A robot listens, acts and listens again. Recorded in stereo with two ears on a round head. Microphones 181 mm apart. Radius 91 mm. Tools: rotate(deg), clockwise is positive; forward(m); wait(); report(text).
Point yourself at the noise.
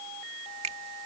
rotate(35)
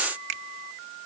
rotate(115)
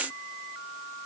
wait()
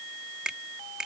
report("Found it: a finger snap, straight ahead.")